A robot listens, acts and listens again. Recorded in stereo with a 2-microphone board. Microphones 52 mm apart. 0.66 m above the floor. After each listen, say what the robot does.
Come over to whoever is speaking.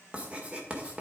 Keep listening.
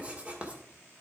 Keep listening.
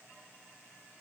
I can't make out anyone speaking, only writing.